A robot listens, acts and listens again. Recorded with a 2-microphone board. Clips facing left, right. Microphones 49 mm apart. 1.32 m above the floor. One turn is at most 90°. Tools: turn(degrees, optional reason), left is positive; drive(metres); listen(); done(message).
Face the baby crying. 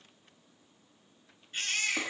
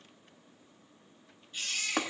turn(degrees=50, reason="The baby crying: about 50° left or 130° left.")
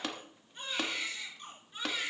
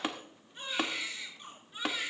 done("Found it: a baby crying, straight ahead, over 4 m away.")